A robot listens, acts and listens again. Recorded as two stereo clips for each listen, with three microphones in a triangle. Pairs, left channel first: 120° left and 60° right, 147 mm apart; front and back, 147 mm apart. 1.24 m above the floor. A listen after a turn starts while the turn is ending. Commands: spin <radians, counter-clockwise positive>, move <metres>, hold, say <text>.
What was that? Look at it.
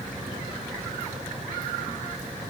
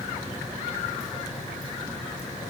hold
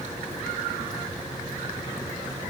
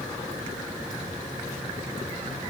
hold
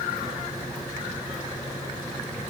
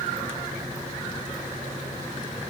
say I can't make out anything to turn to.